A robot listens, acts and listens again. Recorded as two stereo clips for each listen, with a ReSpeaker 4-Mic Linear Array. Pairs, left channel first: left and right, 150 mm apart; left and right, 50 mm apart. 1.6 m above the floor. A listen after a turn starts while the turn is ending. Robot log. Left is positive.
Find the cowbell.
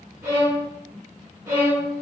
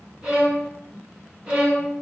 cmd idle
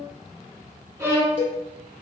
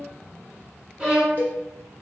note: The cowbell: about 40° left or 140° left.
cmd yaw +40
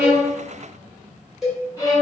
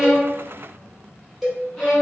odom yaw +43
end: Found it: a cowbell, straight ahead.